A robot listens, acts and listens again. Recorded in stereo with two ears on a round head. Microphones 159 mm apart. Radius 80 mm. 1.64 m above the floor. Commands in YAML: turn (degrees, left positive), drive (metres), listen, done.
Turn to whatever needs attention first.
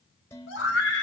turn: 65
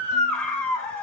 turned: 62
done: "Found it: a scream, straight ahead, over 4 m away."